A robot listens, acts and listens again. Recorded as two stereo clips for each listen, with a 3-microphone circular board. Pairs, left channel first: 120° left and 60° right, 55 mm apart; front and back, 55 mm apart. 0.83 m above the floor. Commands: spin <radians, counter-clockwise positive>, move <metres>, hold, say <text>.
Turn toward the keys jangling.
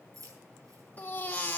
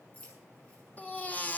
spin -1.13
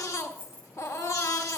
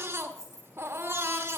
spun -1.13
spin 0.17
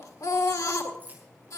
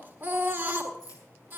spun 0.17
say Found it: keys jangling, straight ahead.